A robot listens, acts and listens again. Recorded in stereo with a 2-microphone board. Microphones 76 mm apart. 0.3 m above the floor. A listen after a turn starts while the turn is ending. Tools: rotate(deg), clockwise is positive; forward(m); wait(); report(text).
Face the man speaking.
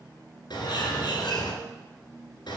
wait()
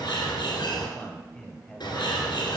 rotate(-30)
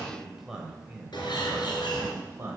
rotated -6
rotate(30)
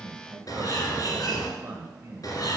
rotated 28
rotate(30)
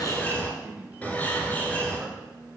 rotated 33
rotate(20)
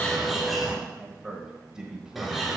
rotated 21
rotate(10)
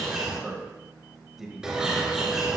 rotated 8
report("Found it: a man speaking, straight ahead.")